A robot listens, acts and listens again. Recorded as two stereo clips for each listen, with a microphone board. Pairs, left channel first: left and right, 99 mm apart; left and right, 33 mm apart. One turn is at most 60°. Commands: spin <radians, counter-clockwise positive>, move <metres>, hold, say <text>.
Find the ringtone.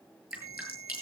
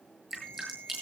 spin 0.52
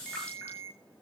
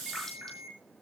say Facing the ringtone, over 4 m away.